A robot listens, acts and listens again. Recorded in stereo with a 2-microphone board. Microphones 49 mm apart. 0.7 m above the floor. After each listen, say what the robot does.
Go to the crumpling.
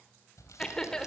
Turn 90° left.
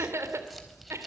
Drive 1.0 m forward.
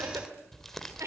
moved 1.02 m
Drive 1.0 m forward.
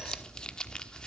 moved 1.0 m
Turn 20° left.
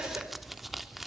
Drive 1.0 m forward.
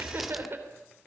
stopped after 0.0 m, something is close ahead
Keep listening.
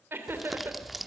I am next to the crumpling.